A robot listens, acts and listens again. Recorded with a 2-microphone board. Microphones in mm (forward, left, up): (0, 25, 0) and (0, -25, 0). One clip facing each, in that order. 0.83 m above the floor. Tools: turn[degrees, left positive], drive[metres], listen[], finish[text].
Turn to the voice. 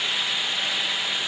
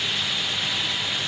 Action: listen[]
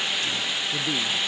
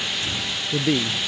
Action: turn[-90]
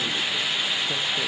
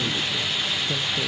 Action: listen[]
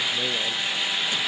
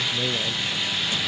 Action: finish[Facing the man speaking.]